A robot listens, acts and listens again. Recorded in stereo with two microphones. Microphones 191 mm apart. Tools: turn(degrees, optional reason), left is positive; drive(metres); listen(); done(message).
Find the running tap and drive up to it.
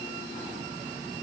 listen()
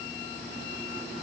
listen()
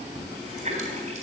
turn(degrees=-35, reason="The running tap: about 35° right or 145° right.")
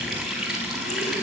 drive(metres=1.0)
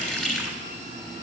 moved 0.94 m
drive(metres=1.0)
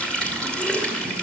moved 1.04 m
drive(metres=1.0)
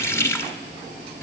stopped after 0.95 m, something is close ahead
turn(degrees=15, reason="The running tap is now 15° left.")
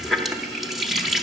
done("I am next to the running tap.")